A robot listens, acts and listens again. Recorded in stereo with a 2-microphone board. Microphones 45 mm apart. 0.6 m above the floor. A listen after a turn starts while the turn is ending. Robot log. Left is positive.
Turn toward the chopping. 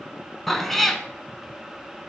cmd idle
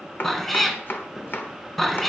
note: The chopping: about 50° left or 130° left.
cmd yaw +50
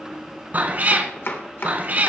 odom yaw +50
note: So it is at 75° left.
cmd yaw +75
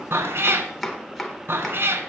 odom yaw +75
end: Facing the chopping.